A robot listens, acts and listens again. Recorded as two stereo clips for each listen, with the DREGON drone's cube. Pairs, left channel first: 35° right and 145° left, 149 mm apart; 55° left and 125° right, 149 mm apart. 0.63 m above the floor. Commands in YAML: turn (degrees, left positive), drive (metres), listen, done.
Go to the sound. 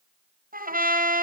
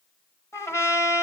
turn: 125
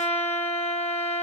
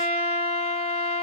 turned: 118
turn: 10
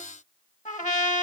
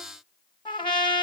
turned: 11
drive: 1.0
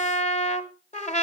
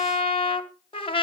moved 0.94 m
drive: 1.0
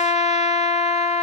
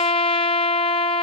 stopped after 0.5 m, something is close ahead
done: "Arrived at the trumpet, straight ahead."